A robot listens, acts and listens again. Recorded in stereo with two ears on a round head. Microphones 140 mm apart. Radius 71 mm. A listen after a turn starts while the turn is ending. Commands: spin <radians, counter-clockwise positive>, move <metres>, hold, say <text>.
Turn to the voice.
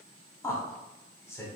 spin 0.35
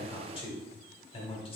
spin 2.44
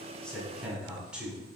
say Found it: a man speaking, straight ahead.